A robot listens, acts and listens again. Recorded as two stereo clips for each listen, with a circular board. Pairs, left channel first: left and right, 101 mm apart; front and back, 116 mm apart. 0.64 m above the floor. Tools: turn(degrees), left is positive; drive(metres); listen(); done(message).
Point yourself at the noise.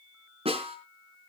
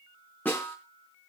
turn(degrees=-75)
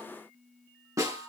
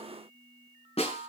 turn(degrees=-30)
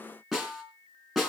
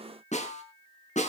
done("Found it: a snare drum, straight ahead.")